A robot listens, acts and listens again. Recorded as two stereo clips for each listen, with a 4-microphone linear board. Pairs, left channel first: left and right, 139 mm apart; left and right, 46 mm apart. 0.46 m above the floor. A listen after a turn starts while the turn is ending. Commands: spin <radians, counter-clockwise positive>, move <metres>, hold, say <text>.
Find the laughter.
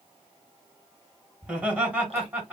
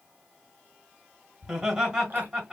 spin -0.52
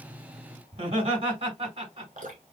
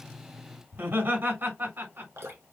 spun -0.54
spin -2.36
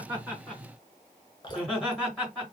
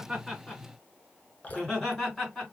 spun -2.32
say Facing the laughter, over 4 m away.